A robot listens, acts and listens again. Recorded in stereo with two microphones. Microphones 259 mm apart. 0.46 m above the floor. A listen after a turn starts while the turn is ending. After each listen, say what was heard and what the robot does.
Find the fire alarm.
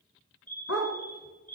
The fire alarm: about 30° left or 150° left. Turn 30° left.
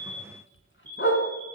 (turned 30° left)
Facing the fire alarm.